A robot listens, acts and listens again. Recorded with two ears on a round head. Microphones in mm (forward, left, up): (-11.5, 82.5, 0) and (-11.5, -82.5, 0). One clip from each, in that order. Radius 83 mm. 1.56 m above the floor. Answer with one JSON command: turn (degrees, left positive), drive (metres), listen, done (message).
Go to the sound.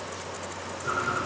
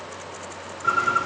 {"turn": -55}
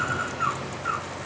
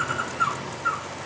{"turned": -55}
{"turn": -65}
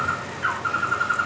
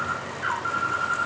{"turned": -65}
{"drive": 1.0}
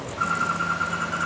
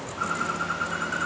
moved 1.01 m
{"drive": 1.0}
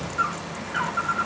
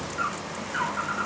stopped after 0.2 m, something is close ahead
{"done": "Arrived at the bird, straight ahead."}